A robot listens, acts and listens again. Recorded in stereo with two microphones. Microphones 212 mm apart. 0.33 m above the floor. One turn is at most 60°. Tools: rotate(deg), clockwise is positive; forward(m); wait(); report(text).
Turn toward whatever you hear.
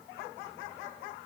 wait()
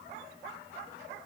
wait()
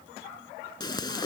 rotate(-20)
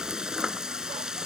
report("Facing the frying.")